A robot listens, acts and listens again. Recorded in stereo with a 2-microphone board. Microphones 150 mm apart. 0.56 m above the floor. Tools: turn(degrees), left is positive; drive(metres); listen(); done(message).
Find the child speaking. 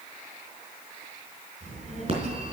turn(degrees=-50)
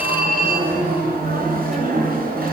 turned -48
listen()
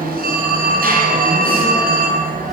listen()
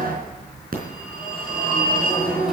done("Found it: a child speaking, straight ahead.")